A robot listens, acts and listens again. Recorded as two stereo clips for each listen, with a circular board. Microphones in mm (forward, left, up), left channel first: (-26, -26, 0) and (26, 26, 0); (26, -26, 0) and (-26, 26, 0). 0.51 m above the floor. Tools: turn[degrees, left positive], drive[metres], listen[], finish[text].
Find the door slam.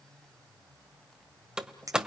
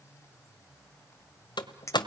Thought: The door slam: 35° right.
Action: turn[-35]
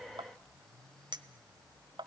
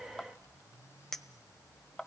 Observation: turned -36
Action: finish[I heard a door slam from this way, but can't make it out now.]